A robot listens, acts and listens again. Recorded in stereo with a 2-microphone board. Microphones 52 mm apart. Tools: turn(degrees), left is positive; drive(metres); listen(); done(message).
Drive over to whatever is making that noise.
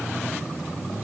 listen()
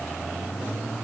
listen()
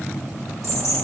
turn(degrees=70)
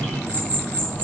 turn(degrees=40)
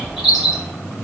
drive(metres=1.0)
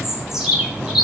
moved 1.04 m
turn(degrees=-10)
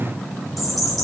drive(metres=1.0)
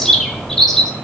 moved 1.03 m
turn(degrees=10)
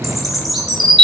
drive(metres=1.0)
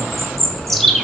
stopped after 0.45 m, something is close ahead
done("Arrived at the bird, straight ahead.")